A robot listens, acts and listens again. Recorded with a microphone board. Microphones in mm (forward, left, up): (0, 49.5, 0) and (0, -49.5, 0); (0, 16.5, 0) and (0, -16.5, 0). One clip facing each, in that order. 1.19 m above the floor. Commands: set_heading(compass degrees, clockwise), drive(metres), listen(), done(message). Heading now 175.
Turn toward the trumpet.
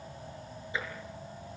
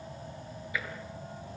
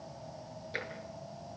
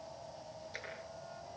listen()
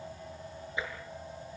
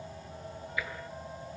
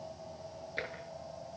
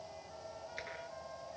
listen()
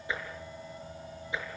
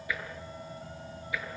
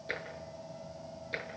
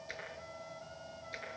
done("I can't make out a trumpet to turn to.")